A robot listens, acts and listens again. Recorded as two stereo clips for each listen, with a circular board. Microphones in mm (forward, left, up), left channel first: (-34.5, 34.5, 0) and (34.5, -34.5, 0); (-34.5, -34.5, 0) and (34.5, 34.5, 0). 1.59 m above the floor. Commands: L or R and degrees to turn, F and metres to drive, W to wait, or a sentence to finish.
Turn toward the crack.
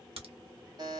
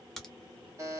R50
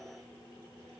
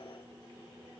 I heard a crack from this way, but can't make it out now.